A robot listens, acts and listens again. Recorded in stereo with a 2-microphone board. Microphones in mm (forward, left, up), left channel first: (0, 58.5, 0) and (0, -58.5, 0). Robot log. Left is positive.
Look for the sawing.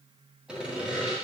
cmd yaw -30
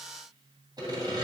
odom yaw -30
note: So it is at 145° right.
cmd yaw -145
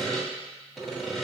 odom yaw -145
end: Found it: sawing, straight ahead.